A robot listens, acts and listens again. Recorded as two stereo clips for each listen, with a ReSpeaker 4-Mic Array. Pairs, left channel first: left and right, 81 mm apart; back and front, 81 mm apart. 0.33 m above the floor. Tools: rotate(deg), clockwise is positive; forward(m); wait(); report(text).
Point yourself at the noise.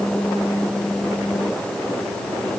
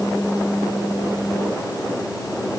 wait()
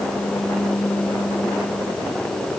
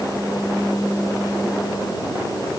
wait()
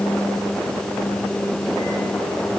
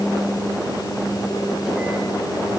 report("I can't make out anything.")